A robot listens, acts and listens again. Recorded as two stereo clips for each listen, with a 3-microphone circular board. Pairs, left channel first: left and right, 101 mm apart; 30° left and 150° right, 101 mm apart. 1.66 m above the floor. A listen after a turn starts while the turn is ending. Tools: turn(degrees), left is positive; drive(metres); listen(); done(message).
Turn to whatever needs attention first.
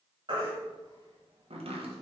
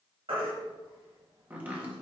turn(degrees=-125)
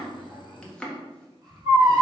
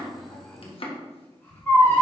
turn(degrees=-40)
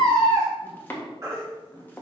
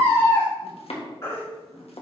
turn(degrees=-30)
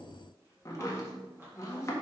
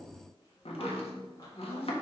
listen()
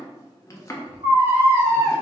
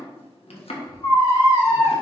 turn(degrees=-20)
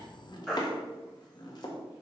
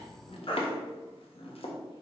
done("Found it: a baby crying, straight ahead.")